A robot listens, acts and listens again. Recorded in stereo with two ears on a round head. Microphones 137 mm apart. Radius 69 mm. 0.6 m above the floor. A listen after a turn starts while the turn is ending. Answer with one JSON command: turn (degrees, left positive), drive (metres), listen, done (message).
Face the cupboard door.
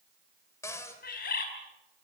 {"turn": 20}
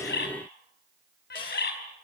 {"listen": true}
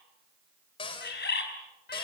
{"turn": 140}
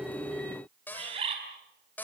{"turn": 15}
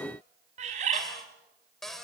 {"done": "Facing the cupboard door."}